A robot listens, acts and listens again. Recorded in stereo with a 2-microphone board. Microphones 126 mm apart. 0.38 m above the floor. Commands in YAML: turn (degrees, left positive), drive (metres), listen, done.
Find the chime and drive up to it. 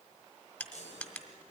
turn: 60
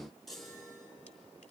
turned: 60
drive: 1.0
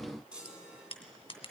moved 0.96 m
turn: -10
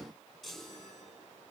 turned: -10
drive: 1.0
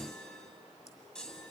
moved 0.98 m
drive: 1.0
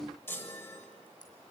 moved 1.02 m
turn: 20
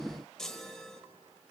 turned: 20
drive: 1.0
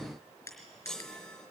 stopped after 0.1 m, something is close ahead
done: "I am next to the chime."